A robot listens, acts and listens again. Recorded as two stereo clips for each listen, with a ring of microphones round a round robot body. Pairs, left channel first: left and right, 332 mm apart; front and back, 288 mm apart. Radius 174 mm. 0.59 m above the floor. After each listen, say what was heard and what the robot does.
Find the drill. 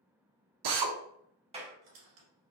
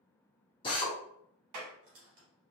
The drill: 75° right. Turn 75° right.
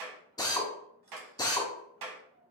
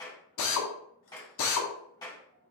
The drill is now 10° left. Turn 10° left.
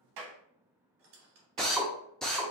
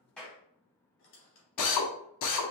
Found it: a drill, straight ahead.